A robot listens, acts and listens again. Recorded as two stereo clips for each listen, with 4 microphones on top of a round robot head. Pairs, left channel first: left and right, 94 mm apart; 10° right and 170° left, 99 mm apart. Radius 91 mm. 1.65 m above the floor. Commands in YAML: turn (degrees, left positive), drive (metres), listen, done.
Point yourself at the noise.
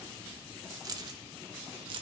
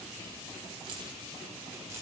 turn: -115
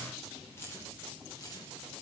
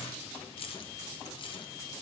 turn: 30
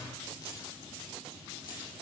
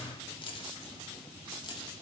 turn: 30
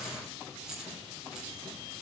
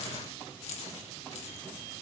done: "Facing the keys jangling, 2 to 4 m away."